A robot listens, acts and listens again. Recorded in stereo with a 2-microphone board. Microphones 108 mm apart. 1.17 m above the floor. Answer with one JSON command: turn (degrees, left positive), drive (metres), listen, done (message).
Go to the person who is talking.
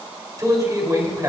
{"turn": -35}
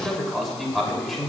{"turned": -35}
{"drive": 1.0}
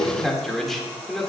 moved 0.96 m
{"drive": 1.0}
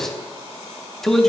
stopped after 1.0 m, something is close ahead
{"done": "I am next to the man speaking."}